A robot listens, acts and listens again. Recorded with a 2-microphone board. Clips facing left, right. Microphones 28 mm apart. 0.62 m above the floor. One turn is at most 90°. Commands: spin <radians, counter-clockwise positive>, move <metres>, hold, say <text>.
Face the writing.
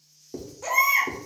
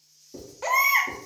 spin 0.70
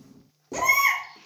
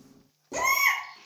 hold
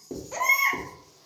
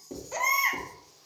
say Found it: writing, straight ahead, 1 to 2 m away.